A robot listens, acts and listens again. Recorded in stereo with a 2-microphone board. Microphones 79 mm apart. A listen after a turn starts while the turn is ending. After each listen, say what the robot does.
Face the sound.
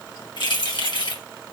Turn 70° left.
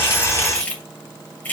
Turn 20° left.
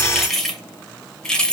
Turn 10° left.
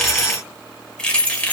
Turn 15° left.
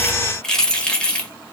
Turn 15° left.
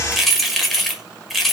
Found it: keys jangling, straight ahead, 1 to 2 m away.